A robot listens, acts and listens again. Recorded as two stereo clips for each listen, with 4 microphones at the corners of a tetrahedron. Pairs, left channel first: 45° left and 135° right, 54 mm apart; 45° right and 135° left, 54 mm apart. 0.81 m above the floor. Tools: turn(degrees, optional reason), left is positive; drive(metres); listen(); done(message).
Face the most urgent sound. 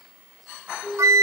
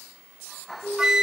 turn(degrees=20, reason="The siren: 20° left.")
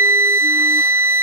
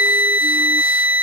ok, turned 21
listen()
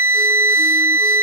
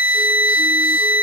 listen()
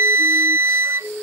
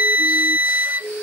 done("Facing the siren.")